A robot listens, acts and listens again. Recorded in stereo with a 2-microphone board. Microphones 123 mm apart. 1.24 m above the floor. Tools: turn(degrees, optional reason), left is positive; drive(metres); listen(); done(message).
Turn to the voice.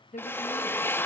turn(degrees=90)
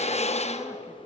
listen()
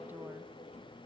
listen()
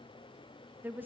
turn(degrees=-15, reason="The woman speaking is now 15° right.")
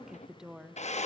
done("Facing the woman speaking, 1 to 2 m away.")